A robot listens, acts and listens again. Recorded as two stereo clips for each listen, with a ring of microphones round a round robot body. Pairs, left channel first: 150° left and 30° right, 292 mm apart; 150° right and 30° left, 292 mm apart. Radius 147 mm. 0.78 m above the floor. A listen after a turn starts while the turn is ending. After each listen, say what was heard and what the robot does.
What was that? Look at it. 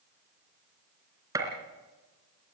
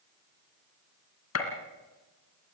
The gunshot: 110° right. Turn 110° right.
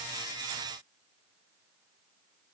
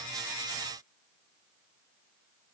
Facing where the gunshot came from. I can't hear it now.